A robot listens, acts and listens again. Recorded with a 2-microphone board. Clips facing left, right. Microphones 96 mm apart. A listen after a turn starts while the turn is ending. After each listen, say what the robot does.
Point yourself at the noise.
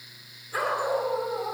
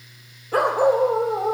Turn 60° right.
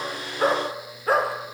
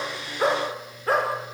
Facing the dog barking, over 4 m away.